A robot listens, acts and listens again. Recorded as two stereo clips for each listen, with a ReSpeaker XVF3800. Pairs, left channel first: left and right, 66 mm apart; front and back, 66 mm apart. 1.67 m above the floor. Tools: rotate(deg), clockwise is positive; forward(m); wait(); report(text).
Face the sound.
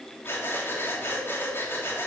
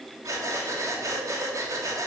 rotate(-145)
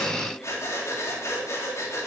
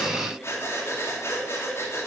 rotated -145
rotate(-45)
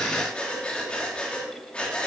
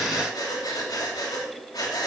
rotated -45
rotate(-15)
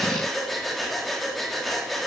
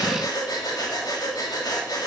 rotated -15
report("Found it: breathing, straight ahead, 2 to 4 m away.")